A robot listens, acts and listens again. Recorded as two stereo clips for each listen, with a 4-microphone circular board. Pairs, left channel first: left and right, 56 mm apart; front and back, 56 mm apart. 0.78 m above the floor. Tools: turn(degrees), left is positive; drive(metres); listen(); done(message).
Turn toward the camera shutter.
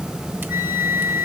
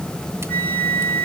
listen()
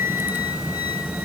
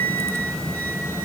listen()
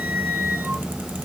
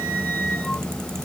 done("I can't make out a camera shutter to turn to.")